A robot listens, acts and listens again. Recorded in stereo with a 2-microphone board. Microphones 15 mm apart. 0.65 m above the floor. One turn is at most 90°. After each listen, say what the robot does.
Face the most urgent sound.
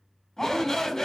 Turn 30° left.
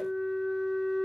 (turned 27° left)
Keep listening.
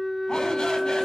Keep listening.
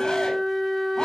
I heard a shout, but can't make it out now. It was about 5° left or 120° left.